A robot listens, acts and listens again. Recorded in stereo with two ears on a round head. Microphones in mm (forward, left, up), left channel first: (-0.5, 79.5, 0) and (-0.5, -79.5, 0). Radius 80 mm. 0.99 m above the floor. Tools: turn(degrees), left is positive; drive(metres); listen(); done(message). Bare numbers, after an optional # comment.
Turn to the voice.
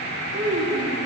# The child speaking: about 70° right or 110° right.
turn(-70)
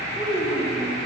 done("Facing the child speaking.")